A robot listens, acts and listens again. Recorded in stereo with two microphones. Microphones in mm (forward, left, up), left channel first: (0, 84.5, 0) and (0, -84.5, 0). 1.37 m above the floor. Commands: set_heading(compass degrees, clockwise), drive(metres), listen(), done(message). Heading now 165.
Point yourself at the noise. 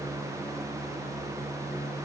listen()
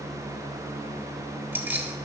set_heading(195)
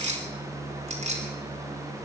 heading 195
set_heading(335)
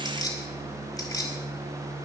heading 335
set_heading(315)
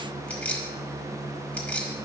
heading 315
set_heading(305)
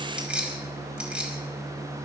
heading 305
done("Found it: keys jangling, straight ahead, over 4 m away.")